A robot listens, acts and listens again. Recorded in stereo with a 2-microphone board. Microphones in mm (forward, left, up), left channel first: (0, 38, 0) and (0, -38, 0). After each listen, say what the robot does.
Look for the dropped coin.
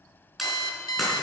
Turn 30° left.
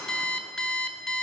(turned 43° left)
Keep listening.
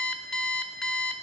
I heard a dropped coin, but can't make it out now. It was about 45° right or 140° left.